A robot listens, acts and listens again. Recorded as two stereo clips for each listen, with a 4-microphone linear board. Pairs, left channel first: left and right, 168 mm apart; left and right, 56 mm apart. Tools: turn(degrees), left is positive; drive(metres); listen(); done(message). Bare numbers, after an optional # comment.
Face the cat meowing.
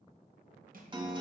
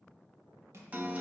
listen()
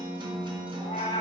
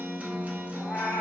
# The cat meowing: about 30° left or 150° left.
turn(30)
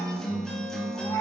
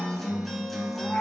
# The cat meowing: about 20° left or 160° left.
turn(20)
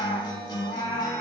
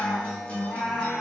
# The cat meowing: about 20° left or 160° left.
turn(20)
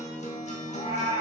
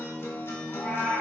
# The cat meowing: about 30° left or 150° left.
turn(30)
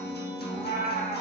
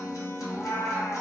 # So it is at 125° left.
turn(125)
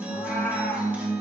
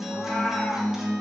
done("Facing the cat meowing, 2 to 4 m away.")